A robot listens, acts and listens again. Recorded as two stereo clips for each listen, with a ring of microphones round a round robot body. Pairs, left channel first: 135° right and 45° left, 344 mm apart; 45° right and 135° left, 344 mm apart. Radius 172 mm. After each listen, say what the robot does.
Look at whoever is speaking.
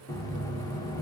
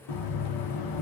Keep listening.
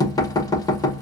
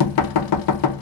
Keep listening.
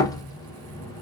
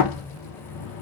I can't make out anyone speaking, only knocking.